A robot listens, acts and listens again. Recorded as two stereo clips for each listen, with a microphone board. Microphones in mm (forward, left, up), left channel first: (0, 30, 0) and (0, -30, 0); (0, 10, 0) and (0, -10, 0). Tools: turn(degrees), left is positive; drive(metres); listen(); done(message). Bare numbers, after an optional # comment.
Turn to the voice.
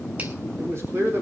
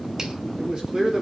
# The man speaking: about 50° right or 130° right.
turn(-50)
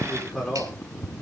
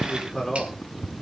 done("Found it: a man speaking, straight ahead.")